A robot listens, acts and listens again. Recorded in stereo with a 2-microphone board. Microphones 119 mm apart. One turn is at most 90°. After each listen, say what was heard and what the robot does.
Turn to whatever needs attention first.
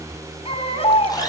The baby crying: about 55° left or 125° left. Turn 55° left.
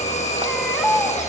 Found it: a baby crying, straight ahead.